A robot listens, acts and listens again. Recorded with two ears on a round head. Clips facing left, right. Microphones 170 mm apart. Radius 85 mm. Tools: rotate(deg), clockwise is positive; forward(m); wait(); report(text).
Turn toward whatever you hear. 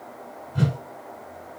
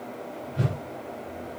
rotate(-60)
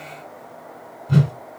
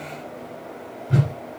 rotate(-50)
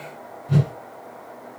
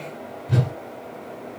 report("Found it: a whoosh, straight ahead.")